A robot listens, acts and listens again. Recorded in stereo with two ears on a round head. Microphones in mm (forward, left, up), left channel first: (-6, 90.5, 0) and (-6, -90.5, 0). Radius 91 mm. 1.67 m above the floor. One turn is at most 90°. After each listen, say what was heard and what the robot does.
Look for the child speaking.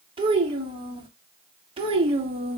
The child speaking: about 30° right or 150° right. Turn 30° right.
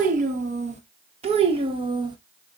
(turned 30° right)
The child speaking: about 20° right or 160° right. Turn 20° right.
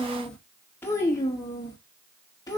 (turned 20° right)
So it is at 20° left. Turn 20° left.
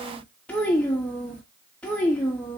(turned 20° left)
Facing the child speaking.